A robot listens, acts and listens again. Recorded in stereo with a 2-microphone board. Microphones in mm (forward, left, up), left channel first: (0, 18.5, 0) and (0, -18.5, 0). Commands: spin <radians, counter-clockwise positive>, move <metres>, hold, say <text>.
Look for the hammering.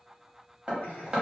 spin -0.44
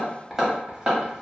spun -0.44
spin -0.17
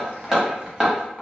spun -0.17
say Facing the hammering.